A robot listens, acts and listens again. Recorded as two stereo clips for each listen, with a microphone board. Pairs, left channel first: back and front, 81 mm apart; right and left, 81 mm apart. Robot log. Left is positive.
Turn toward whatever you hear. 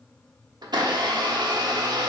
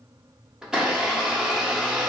note: The blender: 10° left.
cmd yaw +10
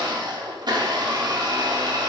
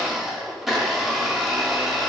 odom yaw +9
end: Facing the blender, 1 to 2 m away.